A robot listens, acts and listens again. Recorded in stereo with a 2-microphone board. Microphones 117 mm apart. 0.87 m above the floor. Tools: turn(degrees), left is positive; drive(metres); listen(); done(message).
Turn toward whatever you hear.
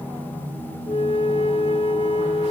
turn(degrees=55)
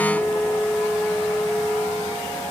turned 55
turn(degrees=10)
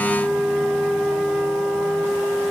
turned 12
done("Facing the flute.")